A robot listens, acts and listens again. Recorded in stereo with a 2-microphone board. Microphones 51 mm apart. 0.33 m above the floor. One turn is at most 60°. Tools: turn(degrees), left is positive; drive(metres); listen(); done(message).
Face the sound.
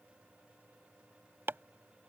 turn(degrees=-50)
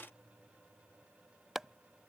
turn(degrees=-10)
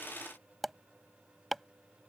done("Found it: chopping, straight ahead.")